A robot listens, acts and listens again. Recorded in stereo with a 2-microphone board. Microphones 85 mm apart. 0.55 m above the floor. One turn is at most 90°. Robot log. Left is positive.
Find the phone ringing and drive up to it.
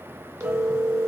note: The phone ringing: about 35° right or 145° right.
cmd yaw -35
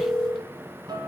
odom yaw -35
cmd fwd 1.0
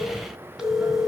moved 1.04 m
cmd fwd 1.0
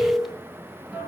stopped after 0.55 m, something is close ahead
end: Arrived at the phone ringing, straight ahead.